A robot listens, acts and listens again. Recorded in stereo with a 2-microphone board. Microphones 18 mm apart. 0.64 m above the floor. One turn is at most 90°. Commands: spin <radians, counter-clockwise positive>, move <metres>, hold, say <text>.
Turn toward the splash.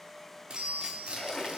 spin 0.52
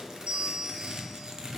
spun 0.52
hold
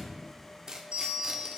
say I heard a splash, but can't make it out now. It was about straight ahead or 120° left.